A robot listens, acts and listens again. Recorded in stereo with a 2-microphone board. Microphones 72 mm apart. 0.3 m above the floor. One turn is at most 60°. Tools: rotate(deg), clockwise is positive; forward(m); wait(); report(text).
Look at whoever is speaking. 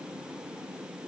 wait()
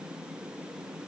wait()
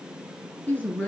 rotate(-20)
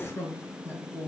rotate(-35)
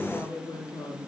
rotate(-60)
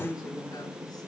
rotate(-60)
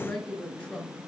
rotate(-15)
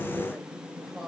report("Found it: a woman speaking, straight ahead.")